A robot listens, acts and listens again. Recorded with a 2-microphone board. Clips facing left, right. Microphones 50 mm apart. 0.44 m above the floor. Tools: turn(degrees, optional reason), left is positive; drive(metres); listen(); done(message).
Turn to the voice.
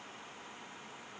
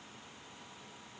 listen()
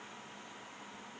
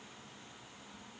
listen()
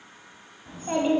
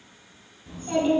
turn(degrees=30, reason="The child speaking: about 30° left or 150° left.")
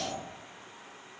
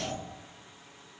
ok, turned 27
turn(degrees=120, reason="So it is at 120° left.")
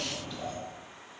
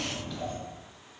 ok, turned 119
done("Found it: a child speaking, straight ahead.")